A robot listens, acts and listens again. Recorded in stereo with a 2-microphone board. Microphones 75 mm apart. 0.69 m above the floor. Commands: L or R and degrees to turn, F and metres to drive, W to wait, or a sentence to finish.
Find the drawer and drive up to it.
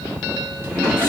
R35
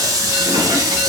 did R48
W
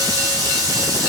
W
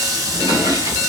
R100
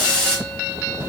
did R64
R35
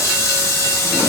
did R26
R10
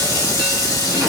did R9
Facing where the drawer came from. I can't hear it now. I did not reach it.